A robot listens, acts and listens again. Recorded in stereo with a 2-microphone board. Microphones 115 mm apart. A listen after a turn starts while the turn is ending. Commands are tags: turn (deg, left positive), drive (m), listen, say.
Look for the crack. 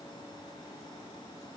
<listen/>
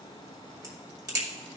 <turn deg="-30"/>
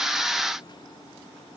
<listen/>
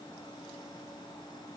<say>I heard a crack, but can't make it out now. It was about straight ahead or 120° right.</say>